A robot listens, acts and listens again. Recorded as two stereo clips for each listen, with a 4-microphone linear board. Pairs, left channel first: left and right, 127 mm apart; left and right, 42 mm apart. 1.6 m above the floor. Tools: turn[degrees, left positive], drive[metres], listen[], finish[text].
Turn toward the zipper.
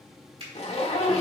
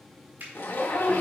Thought: The zipper: about 55° left or 125° left.
Action: turn[55]
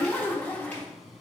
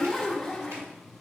Thought: So it is at 15° left.
Action: turn[15]
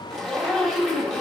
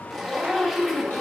Action: finish[Facing the zipper.]